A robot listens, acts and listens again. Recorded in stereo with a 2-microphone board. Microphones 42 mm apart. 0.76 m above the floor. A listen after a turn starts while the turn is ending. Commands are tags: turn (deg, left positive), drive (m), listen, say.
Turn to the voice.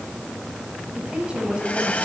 <turn deg="-25"/>
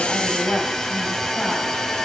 <say>Facing the woman speaking, over 4 m away.</say>